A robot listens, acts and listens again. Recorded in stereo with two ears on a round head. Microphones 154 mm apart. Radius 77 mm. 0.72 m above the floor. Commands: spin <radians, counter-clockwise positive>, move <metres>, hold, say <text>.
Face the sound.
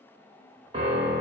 spin -0.52
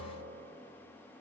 hold
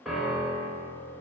say Facing the piano.